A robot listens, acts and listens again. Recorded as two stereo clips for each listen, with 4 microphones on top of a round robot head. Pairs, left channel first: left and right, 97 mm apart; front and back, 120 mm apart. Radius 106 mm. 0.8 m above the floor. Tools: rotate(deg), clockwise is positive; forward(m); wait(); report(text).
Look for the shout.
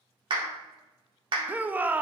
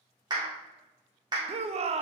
rotate(160)
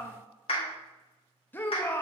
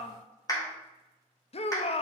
rotate(-20)
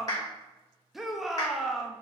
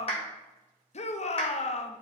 report("Facing the shout.")